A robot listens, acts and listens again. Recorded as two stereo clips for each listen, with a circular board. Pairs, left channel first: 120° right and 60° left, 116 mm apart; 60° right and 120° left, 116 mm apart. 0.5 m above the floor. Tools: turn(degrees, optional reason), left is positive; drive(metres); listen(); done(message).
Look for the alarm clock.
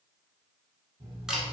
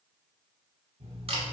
turn(degrees=105, reason="The alarm clock: 105° left.")
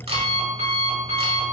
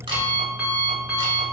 turn(degrees=40, reason="The alarm clock is now 40° left.")
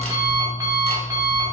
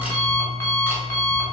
done("Found it: an alarm clock, straight ahead, 1 to 2 m away.")